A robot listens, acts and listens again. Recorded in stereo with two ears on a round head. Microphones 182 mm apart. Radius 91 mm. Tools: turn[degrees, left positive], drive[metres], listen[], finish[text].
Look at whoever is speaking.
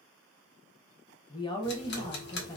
Thought: The woman speaking: about 20° left or 160° left.
Action: turn[20]
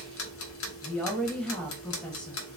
Action: finish[Facing the woman speaking, under 1 m away.]